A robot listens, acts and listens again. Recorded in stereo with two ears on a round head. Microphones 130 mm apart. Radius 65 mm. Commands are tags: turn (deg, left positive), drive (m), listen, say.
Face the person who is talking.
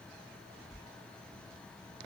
<listen/>
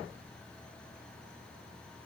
<listen/>
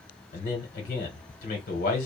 <turn deg="60"/>
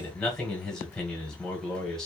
<say>Found it: a man speaking, straight ahead, 1 to 2 m away.</say>